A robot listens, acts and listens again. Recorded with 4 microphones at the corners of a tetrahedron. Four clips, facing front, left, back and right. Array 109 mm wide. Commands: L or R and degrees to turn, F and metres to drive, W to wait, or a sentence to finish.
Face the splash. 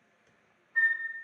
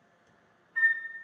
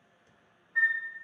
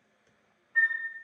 W
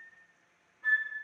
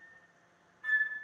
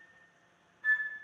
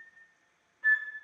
W
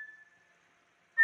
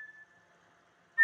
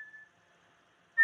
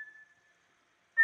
I can't make out a splash, only a flute.